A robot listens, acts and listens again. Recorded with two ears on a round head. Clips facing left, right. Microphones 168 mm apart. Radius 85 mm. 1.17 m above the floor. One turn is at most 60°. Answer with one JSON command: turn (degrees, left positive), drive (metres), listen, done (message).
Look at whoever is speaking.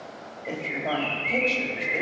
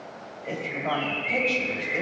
{"turn": 20}
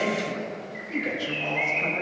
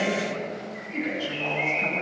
{"turn": 60}
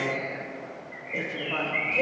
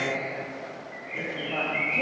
{"turn": 60}
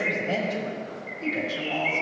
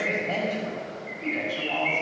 {"turn": 30}
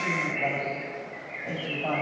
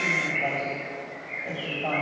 {"done": "Facing the woman speaking."}